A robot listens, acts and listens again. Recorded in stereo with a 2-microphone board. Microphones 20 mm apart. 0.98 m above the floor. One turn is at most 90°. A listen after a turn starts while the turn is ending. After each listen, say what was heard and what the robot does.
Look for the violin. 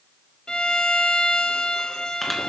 The violin: about 40° left or 140° left. Turn 40° left.
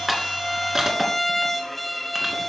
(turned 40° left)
Found it: a violin, straight ahead.